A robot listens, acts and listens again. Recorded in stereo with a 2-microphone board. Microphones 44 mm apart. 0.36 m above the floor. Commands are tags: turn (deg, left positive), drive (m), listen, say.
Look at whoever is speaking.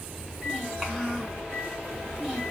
<turn deg="-30"/>
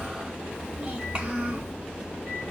<turn deg="-150"/>
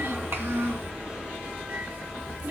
<turn deg="-80"/>
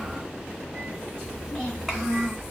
<say>Found it: a child speaking, straight ahead.</say>